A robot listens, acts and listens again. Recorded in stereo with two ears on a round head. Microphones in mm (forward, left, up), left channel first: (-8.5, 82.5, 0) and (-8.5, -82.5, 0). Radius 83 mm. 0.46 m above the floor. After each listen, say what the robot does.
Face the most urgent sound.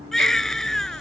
Turn 30° left.
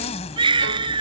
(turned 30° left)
Turn 25° right.
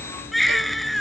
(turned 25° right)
Found it: a baby crying, straight ahead.